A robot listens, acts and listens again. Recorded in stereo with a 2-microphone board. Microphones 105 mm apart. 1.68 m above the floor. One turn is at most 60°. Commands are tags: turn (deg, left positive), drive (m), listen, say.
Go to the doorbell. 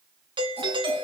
<turn deg="-55"/>
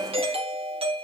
<turn deg="-60"/>
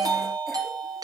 <turn deg="-40"/>
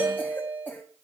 <turn deg="-15"/>
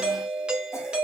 <drive m="1.0"/>
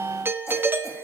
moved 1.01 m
<turn deg="-20"/>
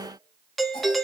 <drive m="1.0"/>
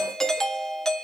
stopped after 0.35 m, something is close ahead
<say>I am next to the doorbell.</say>